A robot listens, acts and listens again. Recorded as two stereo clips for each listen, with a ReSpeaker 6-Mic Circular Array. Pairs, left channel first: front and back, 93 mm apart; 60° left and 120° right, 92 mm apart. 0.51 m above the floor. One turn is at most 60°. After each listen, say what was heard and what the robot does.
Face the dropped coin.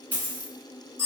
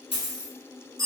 The dropped coin: 70° left. Turn 60° left.
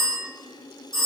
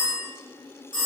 Nothing new. It was at 10° left. Turn 10° left.
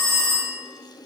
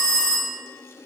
I heard a dropped coin from this way, but can't make it out now.